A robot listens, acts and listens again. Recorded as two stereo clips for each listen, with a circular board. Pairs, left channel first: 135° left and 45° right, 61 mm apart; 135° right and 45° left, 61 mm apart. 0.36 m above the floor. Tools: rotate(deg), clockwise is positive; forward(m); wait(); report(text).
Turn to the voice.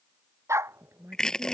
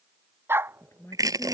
rotate(90)
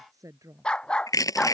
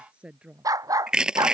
rotate(25)
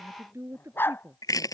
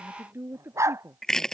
report("Found it: a woman speaking, straight ahead.")